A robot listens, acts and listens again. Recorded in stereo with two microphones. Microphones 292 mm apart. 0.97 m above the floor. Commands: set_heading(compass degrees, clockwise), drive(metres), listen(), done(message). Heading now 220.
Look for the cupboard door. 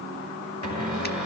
set_heading(130)
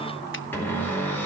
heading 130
done("Found it: a cupboard door, straight ahead, over 4 m away.")